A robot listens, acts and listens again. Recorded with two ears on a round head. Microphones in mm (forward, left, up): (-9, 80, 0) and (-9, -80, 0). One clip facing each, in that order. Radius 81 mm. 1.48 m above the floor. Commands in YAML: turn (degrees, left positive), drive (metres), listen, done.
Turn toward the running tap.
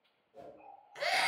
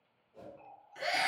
turn: -55
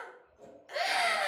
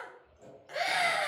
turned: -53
turn: -25
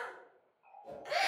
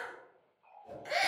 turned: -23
done: "Facing the running tap, under 1 m away."